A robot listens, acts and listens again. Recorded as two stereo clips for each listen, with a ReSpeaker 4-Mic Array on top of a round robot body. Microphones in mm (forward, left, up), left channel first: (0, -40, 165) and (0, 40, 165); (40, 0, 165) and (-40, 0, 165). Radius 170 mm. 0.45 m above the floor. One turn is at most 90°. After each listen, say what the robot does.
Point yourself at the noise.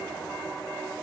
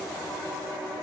Keep listening.
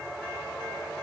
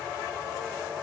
Keep listening.
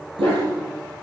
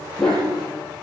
Turn 80° left.
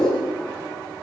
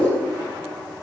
Turn 10° right.
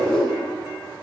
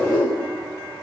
Facing the dog barking.